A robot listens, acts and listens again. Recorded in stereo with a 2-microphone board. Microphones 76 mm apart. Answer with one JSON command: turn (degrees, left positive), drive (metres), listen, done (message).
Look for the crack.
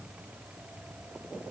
{"listen": true}
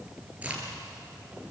{"turn": -20}
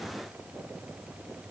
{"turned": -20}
{"listen": true}
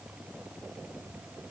{"done": "I heard a crack, but can't make it out now. It was about straight ahead or 140° right."}